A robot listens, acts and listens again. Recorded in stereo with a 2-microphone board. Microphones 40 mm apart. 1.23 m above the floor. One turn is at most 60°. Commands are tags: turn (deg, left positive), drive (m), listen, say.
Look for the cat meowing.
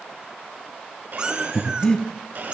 <turn deg="-30"/>
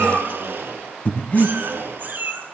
<turn deg="-60"/>
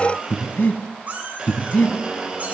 <turn deg="-40"/>
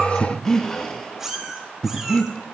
<turn deg="-10"/>
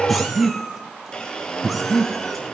<say>Facing the cat meowing, 2 to 4 m away.</say>